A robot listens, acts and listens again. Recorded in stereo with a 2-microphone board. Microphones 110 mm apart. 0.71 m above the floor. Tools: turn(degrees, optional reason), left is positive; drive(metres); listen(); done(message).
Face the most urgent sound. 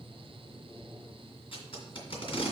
listen()
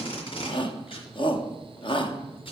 turn(degrees=50, reason="The shout: about 50° left or 130° left.")
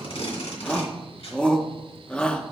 turn(degrees=10, reason="So it is at 10° left.")
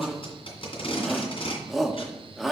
done("Found it: a shout, straight ahead.")